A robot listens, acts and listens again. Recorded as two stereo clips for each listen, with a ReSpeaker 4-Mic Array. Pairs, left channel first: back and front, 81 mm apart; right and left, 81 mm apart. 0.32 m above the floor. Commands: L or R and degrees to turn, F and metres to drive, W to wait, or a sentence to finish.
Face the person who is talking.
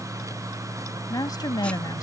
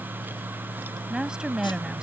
L170
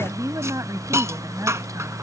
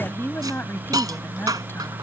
R35
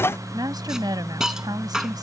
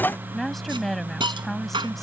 Found it: a woman speaking, straight ahead.